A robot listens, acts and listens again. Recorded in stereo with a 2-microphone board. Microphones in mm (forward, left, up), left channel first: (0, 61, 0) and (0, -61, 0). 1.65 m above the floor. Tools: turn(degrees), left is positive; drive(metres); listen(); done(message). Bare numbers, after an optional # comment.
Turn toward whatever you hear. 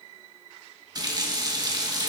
# The running tap: about 35° right or 145° right.
turn(-35)
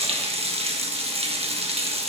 # So it is at 105° right.
turn(-105)
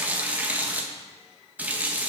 # The running tap is now 15° right.
turn(-15)
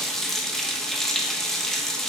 done("Found it: a running tap, straight ahead, 1 to 2 m away.")